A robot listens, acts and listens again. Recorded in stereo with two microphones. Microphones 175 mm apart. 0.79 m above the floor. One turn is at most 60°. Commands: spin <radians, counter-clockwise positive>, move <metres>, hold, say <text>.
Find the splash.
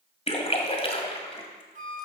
spin 0.61
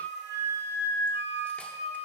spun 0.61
hold
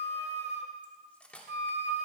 say I heard a splash, but can't make it out now. It was about straight ahead or 110° left.